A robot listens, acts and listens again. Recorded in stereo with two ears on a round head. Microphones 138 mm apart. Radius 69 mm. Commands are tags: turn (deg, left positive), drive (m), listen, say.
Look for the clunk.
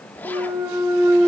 <turn deg="-20"/>
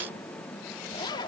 <listen/>
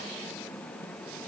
<say>I heard a clunk, but can't make it out now. It was about straight ahead or 140° right.</say>